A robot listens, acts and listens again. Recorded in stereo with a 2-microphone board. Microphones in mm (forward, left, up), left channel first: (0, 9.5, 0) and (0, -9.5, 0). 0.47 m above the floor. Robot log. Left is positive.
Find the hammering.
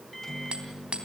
note: The hammering: about 70° right or 110° right.
cmd yaw -70
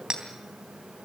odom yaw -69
note: So it is at 35° right.
cmd yaw -35
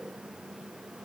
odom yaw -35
cmd idle
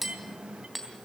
end: Found it: hammering, straight ahead, 2 to 4 m away.